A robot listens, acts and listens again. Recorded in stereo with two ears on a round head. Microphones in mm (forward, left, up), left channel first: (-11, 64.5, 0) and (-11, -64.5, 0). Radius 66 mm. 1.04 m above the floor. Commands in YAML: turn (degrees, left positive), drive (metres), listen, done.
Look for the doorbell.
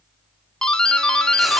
turn: 30
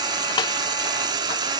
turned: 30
listen: true
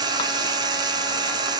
listen: true
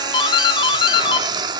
turn: 145
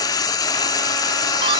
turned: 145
listen: true
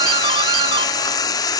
turn: -35
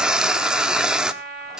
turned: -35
listen: true
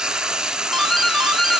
done: "Facing the doorbell, 1 to 2 m away."